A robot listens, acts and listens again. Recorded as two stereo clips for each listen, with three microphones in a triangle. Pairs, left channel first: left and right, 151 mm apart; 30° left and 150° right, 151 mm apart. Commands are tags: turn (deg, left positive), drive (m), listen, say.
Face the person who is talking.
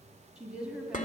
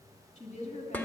<say>Found it: a woman speaking, straight ahead.</say>